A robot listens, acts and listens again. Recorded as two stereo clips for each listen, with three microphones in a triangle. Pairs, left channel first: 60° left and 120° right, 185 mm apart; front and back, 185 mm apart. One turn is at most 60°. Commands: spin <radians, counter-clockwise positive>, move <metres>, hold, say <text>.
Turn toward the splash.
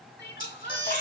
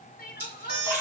spin 1.05
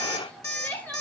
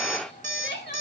spin 0.70
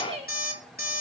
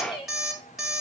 say I heard a splash from this way, but can't make it out now.